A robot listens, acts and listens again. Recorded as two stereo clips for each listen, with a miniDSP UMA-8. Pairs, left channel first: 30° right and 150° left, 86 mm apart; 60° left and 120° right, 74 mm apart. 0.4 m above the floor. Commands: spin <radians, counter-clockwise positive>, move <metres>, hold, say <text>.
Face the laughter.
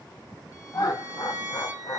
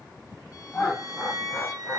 spin -0.17
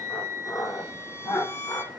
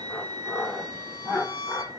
say Found it: laughter, straight ahead, 1 to 2 m away.